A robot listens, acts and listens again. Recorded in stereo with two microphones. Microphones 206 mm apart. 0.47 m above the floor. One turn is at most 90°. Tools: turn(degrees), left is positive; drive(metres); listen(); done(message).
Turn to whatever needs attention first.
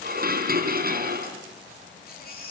turn(degrees=45)
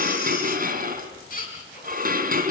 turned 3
turn(degrees=45)
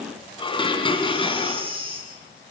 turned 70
turn(degrees=-25)
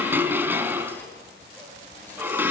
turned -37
turn(degrees=10)
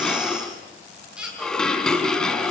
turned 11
done("Found it: a baby crying, straight ahead, over 4 m away.")